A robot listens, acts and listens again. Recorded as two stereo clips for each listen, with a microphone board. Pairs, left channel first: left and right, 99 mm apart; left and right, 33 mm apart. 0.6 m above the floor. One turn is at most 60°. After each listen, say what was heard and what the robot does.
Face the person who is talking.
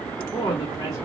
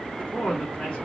The woman speaking: about 35° left or 145° left. Turn 35° left.
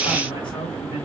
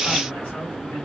So it is at 105° left. Turn 60° left.
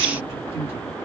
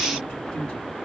Nothing new. It was at 45° left. Turn 45° left.
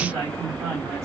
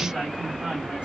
The woman speaking is now 35° right. Turn 35° right.
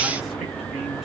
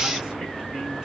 Keep listening.
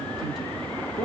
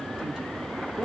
Found it: a woman speaking, straight ahead.